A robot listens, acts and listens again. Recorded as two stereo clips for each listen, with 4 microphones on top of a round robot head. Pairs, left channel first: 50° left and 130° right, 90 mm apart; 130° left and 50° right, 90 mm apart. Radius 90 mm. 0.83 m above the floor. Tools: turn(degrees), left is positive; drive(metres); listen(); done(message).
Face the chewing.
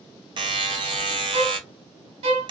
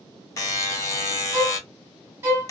listen()
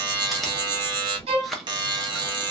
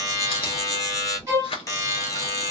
turn(degrees=140)
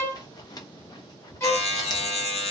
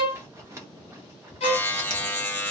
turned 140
turn(degrees=10)
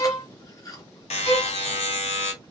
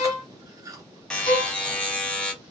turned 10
done("Found it: chewing, straight ahead.")